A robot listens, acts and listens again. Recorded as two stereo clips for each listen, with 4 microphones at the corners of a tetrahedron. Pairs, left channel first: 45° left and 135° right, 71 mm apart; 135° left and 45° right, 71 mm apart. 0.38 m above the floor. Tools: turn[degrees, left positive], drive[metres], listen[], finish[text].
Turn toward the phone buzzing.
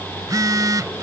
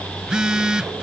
Thought: The phone buzzing: 120° right.
Action: turn[-120]
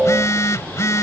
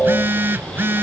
Thought: The phone buzzing is now 10° left.
Action: turn[10]
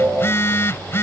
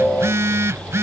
Action: finish[Found it: a phone buzzing, straight ahead.]